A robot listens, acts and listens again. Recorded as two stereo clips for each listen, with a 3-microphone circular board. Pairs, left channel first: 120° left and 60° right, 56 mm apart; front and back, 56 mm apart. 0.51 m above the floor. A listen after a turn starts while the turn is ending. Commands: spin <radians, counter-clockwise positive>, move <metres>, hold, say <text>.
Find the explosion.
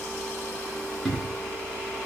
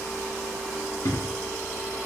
spin 0.52
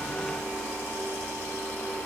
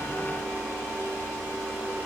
say Facing where the explosion came from. I can't hear it now.